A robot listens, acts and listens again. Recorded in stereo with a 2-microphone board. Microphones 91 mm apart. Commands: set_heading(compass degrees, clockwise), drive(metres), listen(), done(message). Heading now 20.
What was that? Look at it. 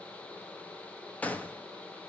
set_heading(5)
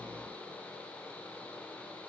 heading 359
listen()
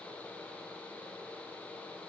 done("I heard a gunshot, but can't make it out now. It was about 5° right or 145° left.")